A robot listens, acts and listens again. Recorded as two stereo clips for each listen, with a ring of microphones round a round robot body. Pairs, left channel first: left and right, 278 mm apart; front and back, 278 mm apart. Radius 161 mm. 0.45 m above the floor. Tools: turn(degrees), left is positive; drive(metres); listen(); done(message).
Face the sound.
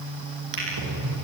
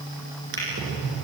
turn(degrees=-120)
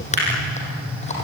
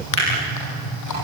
turn(degrees=25)
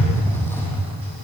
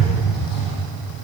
turn(degrees=10)
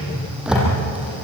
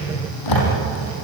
done("Facing the drawer.")